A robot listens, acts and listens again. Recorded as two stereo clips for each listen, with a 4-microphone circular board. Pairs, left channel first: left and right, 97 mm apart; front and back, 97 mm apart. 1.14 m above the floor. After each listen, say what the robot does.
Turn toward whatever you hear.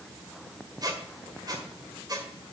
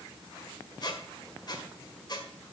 Turn 45° right.
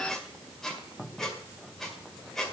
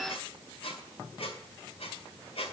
Found it: a squeak, straight ahead, 1 to 2 m away.